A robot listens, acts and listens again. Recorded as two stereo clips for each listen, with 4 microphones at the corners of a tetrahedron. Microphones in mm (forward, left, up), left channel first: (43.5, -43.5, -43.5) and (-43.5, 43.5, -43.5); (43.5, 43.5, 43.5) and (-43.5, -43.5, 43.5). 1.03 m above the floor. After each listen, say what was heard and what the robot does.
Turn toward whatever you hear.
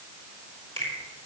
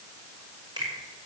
The finger snap: 170° left. Turn 170° left.
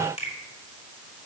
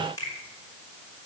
The finger snap is now 15° right. Turn 15° right.
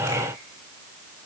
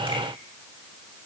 Keep listening.
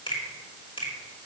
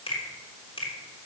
Found it: a finger snap, straight ahead.